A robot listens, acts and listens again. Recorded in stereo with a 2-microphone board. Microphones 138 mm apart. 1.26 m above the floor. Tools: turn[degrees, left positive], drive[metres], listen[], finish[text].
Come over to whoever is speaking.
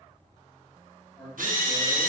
Action: turn[30]
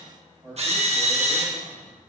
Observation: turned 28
Thought: So it is at 25° right.
Action: turn[-25]
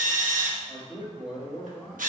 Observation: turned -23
Action: drive[1.0]
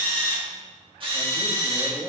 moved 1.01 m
Action: drive[1.0]
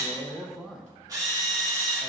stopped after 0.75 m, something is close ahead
Action: finish[Arrived at the man speaking, straight ahead.]